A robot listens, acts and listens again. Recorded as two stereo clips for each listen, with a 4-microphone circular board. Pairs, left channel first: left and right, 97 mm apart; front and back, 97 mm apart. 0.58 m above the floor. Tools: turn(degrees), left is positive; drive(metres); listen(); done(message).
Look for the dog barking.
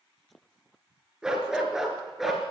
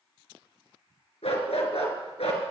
done("Facing the dog barking.")